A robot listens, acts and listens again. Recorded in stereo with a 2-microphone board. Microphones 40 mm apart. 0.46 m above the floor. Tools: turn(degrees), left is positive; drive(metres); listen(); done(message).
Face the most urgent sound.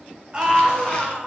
turn(degrees=-25)
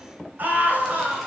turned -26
turn(degrees=-130)
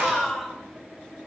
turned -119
turn(degrees=-10)
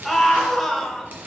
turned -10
done("Facing the scream.")